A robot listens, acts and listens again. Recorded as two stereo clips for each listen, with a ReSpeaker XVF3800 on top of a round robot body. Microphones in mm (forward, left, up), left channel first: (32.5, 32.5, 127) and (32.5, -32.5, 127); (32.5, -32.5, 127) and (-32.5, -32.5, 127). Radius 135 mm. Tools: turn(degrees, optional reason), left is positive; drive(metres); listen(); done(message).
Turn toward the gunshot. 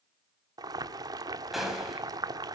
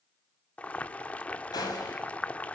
done("Found it: a gunshot, straight ahead.")